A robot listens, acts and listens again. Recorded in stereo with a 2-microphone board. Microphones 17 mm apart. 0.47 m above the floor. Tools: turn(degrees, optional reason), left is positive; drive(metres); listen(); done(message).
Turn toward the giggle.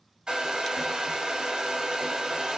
listen()
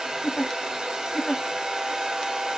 turn(degrees=25, reason="The giggle: about 25° left or 155° left.")
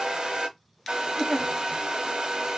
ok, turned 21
done("Facing the giggle.")